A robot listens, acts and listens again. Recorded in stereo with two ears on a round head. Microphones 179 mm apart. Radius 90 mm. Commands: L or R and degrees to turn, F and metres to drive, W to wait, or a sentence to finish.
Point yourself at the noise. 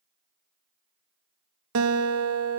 R90
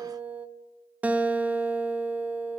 Found it: a guitar, straight ahead.